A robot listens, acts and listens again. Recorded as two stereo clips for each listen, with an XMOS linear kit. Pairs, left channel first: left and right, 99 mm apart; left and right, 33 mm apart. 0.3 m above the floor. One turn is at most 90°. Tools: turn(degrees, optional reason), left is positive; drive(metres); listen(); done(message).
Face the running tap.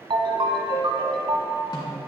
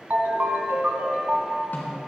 listen()
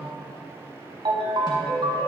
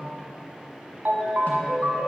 listen()
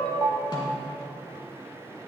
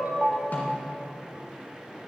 done("I can't make out a running tap to turn to.")